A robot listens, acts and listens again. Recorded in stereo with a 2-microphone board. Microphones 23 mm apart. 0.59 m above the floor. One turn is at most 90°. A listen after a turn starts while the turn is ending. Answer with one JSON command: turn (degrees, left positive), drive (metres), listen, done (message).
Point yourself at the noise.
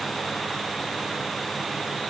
{"listen": true}
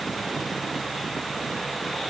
{"listen": true}
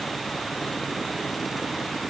{"done": "I can't make out anything."}